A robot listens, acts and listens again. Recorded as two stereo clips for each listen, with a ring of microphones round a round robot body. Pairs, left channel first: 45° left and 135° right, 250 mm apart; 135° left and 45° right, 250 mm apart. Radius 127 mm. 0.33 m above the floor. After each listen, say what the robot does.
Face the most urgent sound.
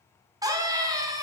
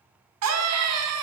Turn 60° right.
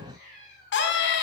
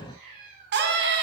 Found it: a scream, straight ahead.